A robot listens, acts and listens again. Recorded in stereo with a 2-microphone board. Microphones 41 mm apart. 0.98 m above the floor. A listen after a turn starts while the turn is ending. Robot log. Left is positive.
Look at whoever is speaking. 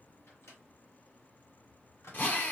cmd idle
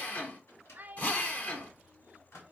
note: The child speaking: about 40° right or 140° right.
cmd yaw -40
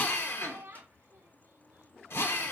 note: So it is at 95° right.
cmd yaw -95
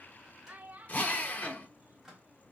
note: The child speaking is now 40° right.
cmd yaw -40
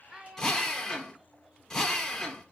note: The child speaking is now 15° right.
cmd yaw -15
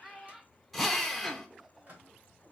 end: Facing the child speaking.